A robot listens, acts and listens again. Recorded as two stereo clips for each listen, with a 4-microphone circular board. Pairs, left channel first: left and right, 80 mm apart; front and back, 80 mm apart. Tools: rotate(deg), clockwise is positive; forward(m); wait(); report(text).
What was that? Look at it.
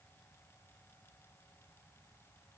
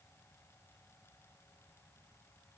wait()
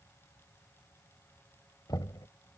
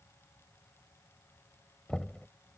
rotate(-80)
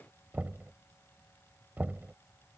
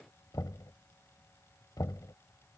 rotate(25)
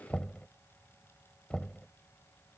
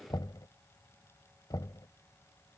rotate(-15)
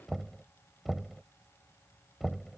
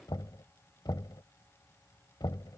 report("Found it: knocking, straight ahead.")